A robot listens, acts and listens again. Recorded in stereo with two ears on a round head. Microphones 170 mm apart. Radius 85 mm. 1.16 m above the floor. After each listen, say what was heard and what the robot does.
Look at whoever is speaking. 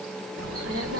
The child speaking: about 65° right or 115° right. Turn 65° right.
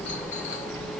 So it is at 15° left. Turn 15° left.
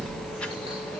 The child speaking is now 10° left. Turn 10° left.
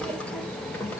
The child speaking is now 10° left. Turn 10° left.
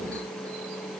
Keep listening.
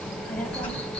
The child speaking is now 10° left. Turn 10° left.
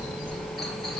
Found it: a child speaking, straight ahead.